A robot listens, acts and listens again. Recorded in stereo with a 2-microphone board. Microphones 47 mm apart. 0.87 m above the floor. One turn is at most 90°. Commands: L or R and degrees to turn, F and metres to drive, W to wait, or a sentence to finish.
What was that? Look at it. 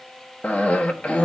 L30
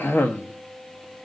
L90
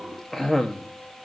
L10
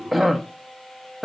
Found it: a cough, straight ahead.